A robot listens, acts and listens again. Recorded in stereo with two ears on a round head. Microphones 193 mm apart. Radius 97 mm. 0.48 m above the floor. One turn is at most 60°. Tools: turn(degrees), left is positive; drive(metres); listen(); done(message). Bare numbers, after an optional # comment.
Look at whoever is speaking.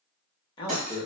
# The man speaking: about 20° left or 160° left.
turn(20)
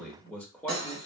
done("Found it: a man speaking, straight ahead, 1 to 2 m away.")